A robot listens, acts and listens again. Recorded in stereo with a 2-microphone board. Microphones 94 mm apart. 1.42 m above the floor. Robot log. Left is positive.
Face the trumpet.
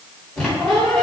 cmd idle
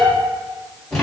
cmd idle
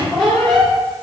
end: I can't make out a trumpet, only a squeak.